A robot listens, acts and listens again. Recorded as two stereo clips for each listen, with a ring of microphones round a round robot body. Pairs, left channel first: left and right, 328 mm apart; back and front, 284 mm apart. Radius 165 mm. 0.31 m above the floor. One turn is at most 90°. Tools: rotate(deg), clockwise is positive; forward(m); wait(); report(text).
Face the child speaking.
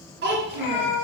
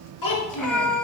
rotate(90)
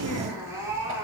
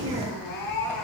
rotate(60)
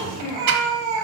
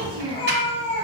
rotate(-10)
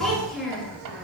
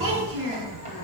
report("Facing the child speaking, 2 to 4 m away.")